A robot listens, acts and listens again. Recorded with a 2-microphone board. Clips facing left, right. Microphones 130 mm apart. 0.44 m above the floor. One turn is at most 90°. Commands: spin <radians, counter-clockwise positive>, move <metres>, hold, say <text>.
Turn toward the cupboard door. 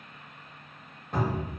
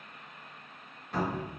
spin 0.87
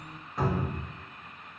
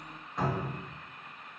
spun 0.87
say Facing the cupboard door.